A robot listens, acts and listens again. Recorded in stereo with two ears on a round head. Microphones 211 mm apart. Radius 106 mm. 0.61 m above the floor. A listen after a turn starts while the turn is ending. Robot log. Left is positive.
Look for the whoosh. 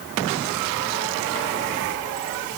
cmd idle
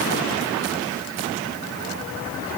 cmd idle
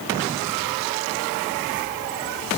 end: I can't make out a whoosh to turn to.